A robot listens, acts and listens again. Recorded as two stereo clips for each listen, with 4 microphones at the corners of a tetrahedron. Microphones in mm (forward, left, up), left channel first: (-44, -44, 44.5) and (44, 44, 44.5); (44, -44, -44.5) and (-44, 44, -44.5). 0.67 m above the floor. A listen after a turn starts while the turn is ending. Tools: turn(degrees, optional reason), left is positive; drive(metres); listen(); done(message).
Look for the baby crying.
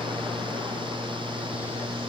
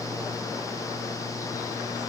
listen()
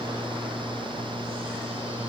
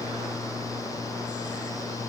listen()
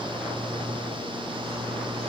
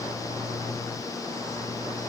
done("I can't make out a baby crying to turn to.")